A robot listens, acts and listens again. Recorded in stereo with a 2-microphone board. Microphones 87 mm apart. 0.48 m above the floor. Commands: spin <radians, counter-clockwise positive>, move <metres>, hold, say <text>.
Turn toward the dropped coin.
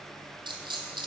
spin -1.13
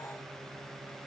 hold
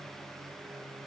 say I heard a dropped coin, but can't make it out now. It was about straight ahead or 50° right.